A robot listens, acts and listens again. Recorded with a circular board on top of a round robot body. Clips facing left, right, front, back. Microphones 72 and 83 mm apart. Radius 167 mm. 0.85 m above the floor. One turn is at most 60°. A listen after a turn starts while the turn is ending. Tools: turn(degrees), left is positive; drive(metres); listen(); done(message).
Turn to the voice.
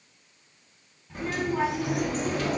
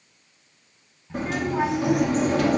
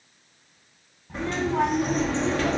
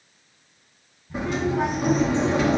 turn(degrees=-15)
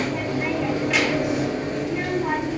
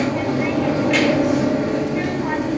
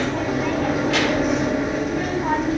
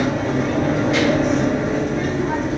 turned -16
listen()
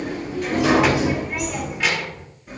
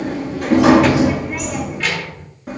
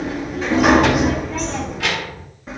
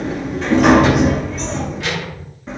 done("Found it: a child speaking, straight ahead, over 4 m away.")